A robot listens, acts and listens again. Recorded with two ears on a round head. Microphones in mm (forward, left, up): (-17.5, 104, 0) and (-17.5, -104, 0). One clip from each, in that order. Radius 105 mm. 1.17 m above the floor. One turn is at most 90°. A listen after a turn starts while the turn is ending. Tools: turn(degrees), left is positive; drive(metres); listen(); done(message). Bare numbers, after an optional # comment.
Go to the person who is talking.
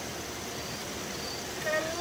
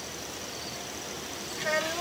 # The child speaking: about 30° right or 150° right.
turn(-30)
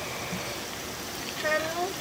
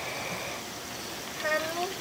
drive(1.0)
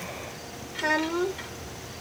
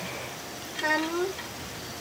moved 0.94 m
drive(1.0)
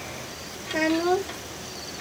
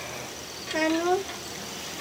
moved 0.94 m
# The child speaking is now 10° right.
turn(-10)
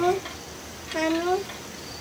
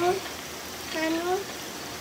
drive(1.0)
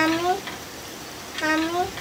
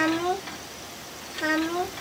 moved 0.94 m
# The child speaking is now 10° left.
turn(10)
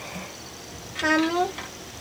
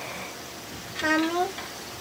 drive(1.0)
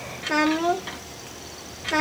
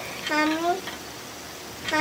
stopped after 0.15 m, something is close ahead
done("Arrived at the child speaking, straight ahead.")